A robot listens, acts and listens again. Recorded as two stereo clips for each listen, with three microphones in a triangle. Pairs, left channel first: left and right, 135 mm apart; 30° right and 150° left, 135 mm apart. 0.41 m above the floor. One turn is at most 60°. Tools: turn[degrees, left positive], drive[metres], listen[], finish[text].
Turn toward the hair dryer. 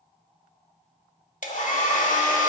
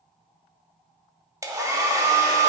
Thought: The hair dryer: 85° left.
Action: turn[60]
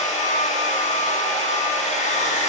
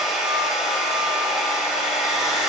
Thought: The hair dryer is now 60° left.
Action: turn[60]
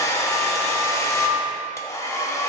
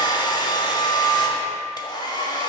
Thought: The hair dryer is now 20° left.
Action: turn[20]
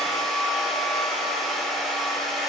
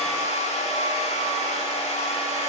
Action: finish[Facing the hair dryer, under 1 m away.]